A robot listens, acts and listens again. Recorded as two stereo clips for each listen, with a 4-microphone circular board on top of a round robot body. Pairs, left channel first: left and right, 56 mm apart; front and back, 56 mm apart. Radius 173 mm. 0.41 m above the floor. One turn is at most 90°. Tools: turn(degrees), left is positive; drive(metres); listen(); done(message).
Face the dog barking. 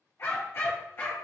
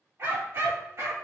turn(degrees=90)
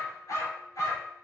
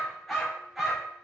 turn(degrees=90)
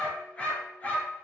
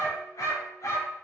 turn(degrees=30)
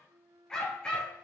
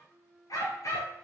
turn(degrees=20)
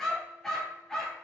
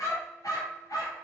turn(degrees=10)
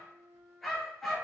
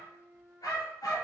done("Found it: a dog barking, straight ahead.")